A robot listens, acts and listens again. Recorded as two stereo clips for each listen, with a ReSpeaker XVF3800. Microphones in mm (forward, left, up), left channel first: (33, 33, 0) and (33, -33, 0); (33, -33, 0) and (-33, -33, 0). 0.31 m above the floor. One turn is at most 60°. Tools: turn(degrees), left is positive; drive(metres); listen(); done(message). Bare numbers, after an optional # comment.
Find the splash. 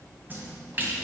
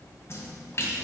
# The splash: 40° right.
turn(-40)
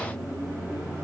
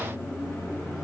done("Facing where the splash came from. I can't hear it now.")